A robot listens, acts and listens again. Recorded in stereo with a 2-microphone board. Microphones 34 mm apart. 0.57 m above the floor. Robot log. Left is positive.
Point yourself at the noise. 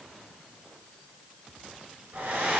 note: The hair dryer: about 55° right or 125° right.
cmd yaw -55
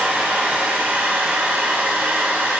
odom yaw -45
note: So it is at 80° right.
cmd yaw -80
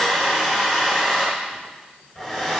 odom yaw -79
end: Facing the hair dryer, 2 to 4 m away.